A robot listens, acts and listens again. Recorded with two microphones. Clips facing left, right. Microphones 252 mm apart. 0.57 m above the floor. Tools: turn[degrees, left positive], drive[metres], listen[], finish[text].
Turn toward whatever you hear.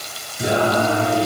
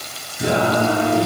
Thought: The singing: about 35° left or 145° left.
Action: turn[35]
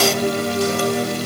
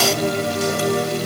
Thought: So it is at 110° left.
Action: turn[110]
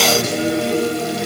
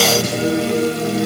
Thought: The singing is now 20° left.
Action: turn[20]
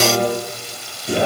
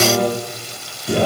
Action: finish[Found it: singing, straight ahead.]